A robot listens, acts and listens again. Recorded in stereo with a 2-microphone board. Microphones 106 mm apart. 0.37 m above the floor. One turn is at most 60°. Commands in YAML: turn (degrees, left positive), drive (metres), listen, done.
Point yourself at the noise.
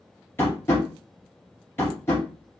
turn: 25
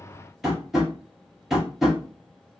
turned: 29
done: "Found it: tapping, straight ahead."